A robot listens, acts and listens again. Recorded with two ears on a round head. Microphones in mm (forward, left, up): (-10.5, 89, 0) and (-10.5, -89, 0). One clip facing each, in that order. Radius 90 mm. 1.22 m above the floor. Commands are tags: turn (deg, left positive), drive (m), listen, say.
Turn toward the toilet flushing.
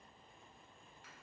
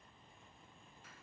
<listen/>
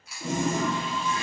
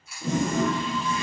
<turn deg="25"/>
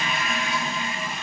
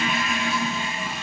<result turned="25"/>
<say>Facing the toilet flushing.</say>